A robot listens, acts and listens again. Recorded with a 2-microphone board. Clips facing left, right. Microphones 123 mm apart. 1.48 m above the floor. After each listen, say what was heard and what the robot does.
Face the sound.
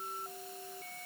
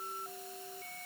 Keep listening.
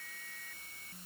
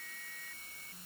Keep listening.
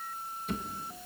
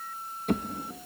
The drawer: about 60° right or 120° right. Turn 60° right.
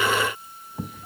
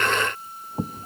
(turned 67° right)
So it is at 40° right. Turn 40° right.
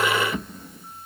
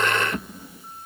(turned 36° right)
Found it: a drawer, straight ahead, 1 to 2 m away.